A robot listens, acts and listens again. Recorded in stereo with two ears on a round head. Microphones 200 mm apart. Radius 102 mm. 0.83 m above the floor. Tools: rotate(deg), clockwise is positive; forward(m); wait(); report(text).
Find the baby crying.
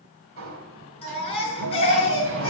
rotate(-25)
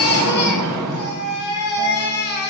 rotate(-130)
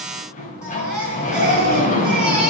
report("Found it: a baby crying, straight ahead, over 4 m away.")